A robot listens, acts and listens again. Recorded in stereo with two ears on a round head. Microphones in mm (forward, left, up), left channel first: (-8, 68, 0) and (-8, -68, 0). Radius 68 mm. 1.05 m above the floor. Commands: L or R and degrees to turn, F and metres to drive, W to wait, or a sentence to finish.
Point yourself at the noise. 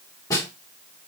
L25
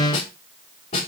L130
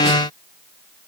W
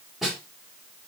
Facing the snare drum, over 4 m away.